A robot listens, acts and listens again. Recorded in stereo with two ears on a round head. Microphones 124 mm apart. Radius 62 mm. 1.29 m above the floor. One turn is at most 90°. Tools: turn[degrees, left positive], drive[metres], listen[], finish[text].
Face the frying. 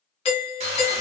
Thought: The frying: about 45° right or 135° right.
Action: turn[-45]
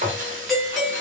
Thought: So it is at 75° right.
Action: turn[-75]
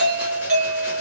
Action: listen[]
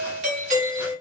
Action: listen[]
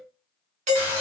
Thought: The frying is now 15° right.
Action: turn[-15]
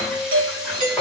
Action: finish[Found it: frying, straight ahead, under 1 m away.]